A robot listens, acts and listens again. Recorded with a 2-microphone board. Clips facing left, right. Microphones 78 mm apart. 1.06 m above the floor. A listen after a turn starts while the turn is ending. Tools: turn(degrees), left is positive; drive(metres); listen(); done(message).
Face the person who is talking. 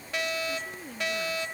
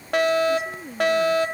turn(degrees=-30)
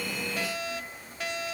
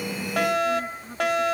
listen()
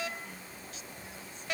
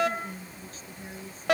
turn(degrees=-140)
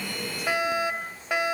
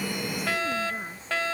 listen()
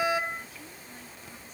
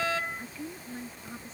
turn(degrees=-35)
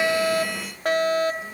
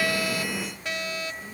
listen()
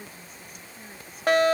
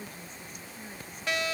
done("Facing the woman speaking.")